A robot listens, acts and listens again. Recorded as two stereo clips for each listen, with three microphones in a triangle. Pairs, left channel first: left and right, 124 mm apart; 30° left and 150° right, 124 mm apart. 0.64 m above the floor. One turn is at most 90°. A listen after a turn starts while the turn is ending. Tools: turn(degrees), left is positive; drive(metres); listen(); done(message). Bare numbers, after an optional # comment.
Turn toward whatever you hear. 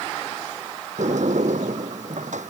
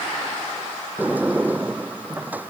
# The sliding door: 70° right.
turn(-70)
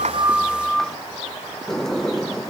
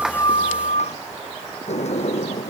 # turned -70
done("Found it: a sliding door, straight ahead.")